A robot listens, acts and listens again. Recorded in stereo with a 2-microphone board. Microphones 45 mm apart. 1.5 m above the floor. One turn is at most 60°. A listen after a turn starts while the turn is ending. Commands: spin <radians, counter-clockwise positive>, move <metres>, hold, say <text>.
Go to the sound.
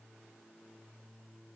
hold
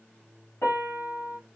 spin 1.05
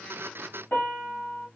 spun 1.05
spin 0.70
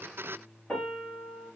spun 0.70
spin 0.17
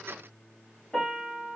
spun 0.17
move 1.0
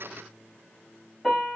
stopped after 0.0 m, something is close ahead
say Something is in my way. I am facing the piano but have not reached it.